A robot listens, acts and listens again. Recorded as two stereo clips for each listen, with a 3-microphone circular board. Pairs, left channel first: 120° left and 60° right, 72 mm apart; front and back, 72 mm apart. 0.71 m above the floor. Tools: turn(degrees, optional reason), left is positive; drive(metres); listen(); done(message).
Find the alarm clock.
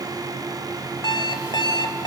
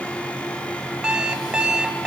turn(degrees=100, reason="The alarm clock: 100° left.")
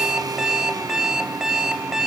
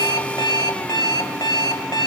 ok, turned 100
turn(degrees=20, reason="The alarm clock is now 20° left.")
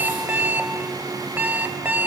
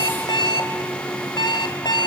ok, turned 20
done("Facing the alarm clock.")